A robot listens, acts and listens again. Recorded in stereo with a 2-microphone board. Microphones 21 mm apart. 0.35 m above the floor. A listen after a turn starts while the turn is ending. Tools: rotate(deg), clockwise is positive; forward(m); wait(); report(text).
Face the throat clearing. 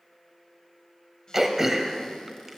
rotate(20)
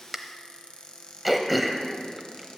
report("Facing the throat clearing.")